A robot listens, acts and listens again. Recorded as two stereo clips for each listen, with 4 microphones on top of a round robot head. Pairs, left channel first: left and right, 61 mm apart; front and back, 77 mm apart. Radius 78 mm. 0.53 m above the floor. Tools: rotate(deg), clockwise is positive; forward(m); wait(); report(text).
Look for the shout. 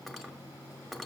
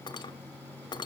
wait()
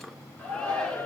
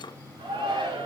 rotate(-165)
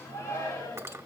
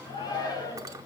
rotate(-30)
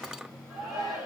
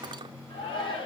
rotate(10)
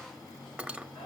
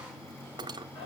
report("Facing the shout, over 4 m away.")